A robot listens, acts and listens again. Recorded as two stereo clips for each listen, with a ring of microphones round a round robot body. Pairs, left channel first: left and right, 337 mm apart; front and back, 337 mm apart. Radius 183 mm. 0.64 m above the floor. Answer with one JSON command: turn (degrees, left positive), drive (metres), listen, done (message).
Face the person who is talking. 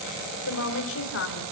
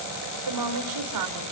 {"turn": 145}
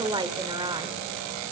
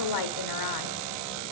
{"turn": -15}
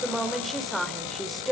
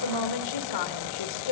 {"done": "Facing the woman speaking."}